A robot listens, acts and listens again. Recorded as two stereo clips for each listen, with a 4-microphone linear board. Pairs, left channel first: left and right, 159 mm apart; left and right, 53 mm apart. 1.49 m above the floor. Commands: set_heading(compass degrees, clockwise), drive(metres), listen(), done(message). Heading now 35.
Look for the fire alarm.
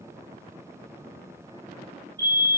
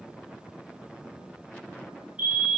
set_heading(60)
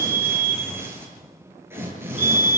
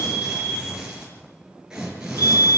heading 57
set_heading(187)
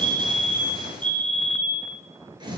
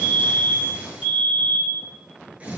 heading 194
done("Facing the fire alarm, over 4 m away.")